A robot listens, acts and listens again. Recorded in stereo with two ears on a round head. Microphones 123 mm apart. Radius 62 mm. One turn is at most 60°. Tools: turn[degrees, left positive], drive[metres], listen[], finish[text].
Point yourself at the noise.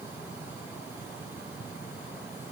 Action: listen[]
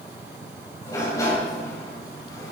Thought: The sliding door: about 25° left or 155° left.
Action: turn[25]
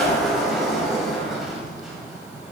Action: finish[Found it: a sliding door, straight ahead, 2 to 4 m away.]